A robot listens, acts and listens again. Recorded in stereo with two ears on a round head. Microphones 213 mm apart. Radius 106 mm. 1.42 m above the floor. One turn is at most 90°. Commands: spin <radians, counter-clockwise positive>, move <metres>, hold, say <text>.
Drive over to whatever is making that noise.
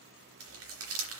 spin -1.13
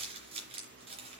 spin -0.52
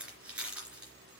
move 1.0
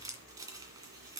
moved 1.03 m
spin -0.35
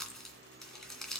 move 1.0
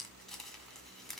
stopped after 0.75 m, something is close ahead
say I am next to the crumpling.